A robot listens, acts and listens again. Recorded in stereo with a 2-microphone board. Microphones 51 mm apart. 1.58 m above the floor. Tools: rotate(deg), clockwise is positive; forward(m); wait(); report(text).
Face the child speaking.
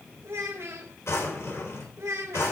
rotate(65)
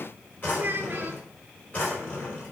rotate(40)
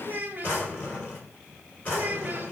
rotate(40)
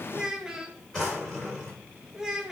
rotate(10)
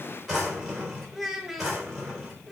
report("Found it: a child speaking, straight ahead, 1 to 2 m away.")